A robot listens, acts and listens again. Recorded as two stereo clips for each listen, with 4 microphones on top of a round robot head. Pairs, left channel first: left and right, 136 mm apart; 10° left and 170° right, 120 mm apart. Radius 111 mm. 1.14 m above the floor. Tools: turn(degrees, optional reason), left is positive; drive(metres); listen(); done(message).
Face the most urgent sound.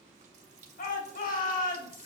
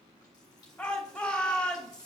turn(degrees=90, reason="The shout: 90° left.")
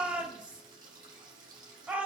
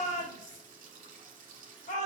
turn(degrees=-10, reason="The shout is now 10° right.")
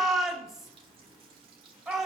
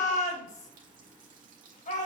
done("Found it: a shout, straight ahead.")